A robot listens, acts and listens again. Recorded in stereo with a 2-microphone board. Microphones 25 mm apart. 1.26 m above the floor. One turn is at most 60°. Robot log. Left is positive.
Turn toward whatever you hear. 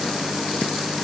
cmd idle
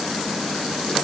cmd idle
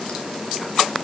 end: I can't make out anything to turn to.